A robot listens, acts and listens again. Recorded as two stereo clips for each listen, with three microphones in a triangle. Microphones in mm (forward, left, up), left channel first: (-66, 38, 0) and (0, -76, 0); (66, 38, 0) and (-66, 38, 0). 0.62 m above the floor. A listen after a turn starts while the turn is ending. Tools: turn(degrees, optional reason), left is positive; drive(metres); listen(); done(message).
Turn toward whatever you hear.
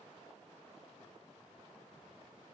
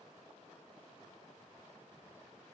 listen()
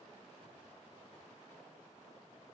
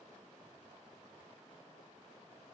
listen()
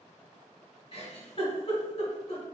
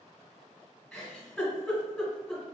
turn(degrees=80, reason="The giggle: 80° left.")
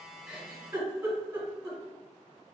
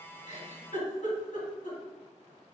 done("Facing the giggle, 1 to 2 m away.")